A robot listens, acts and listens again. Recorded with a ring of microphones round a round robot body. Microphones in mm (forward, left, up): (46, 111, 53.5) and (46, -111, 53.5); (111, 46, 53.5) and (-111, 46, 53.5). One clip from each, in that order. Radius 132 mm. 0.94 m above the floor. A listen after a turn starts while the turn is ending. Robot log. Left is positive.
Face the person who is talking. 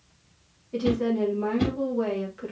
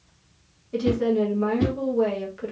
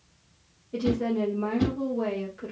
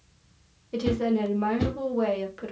note: The woman speaking: 165° right.
cmd yaw -165
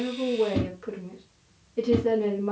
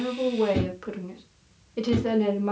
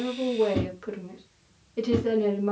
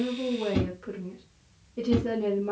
note: The woman speaking is now 50° right.
cmd yaw -50
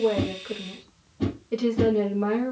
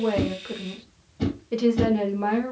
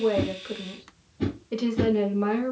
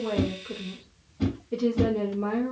note: The woman speaking is now 10° right.
cmd yaw -10
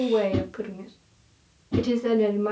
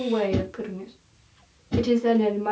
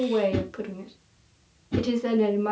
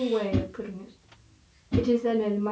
end: Found it: a woman speaking, straight ahead, 1 to 2 m away.